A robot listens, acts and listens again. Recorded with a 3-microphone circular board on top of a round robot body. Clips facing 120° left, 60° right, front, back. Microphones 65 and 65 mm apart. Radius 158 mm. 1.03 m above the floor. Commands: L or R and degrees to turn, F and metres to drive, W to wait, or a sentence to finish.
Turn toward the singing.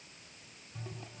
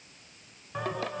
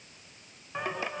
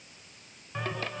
R75
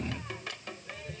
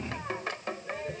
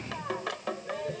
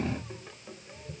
Found it: singing, straight ahead.